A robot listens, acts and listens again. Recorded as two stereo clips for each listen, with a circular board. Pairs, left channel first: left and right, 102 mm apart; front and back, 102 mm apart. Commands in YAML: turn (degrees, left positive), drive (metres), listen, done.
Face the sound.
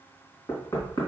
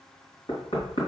turn: 30
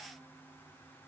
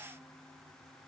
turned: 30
listen: true
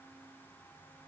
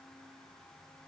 listen: true
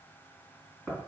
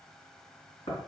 done: "Found it: knocking, straight ahead."